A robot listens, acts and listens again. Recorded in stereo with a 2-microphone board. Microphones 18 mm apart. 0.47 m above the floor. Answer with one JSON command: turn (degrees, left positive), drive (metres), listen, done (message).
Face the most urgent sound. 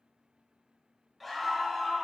{"turn": 30}
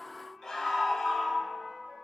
{"turn": 150}
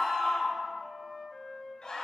{"turn": 55}
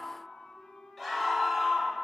{"done": "Facing the scream."}